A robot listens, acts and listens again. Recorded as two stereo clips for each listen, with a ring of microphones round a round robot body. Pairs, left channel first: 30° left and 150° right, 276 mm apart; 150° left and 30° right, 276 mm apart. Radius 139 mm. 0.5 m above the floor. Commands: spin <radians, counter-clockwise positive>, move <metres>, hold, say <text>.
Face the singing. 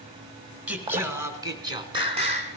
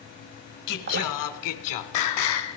spin 2.53
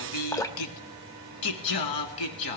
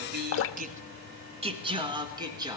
spin 0.79
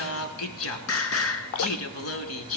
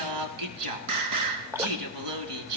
spin -0.17
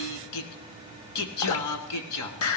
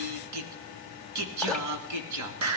say Found it: singing, straight ahead, 1 to 2 m away.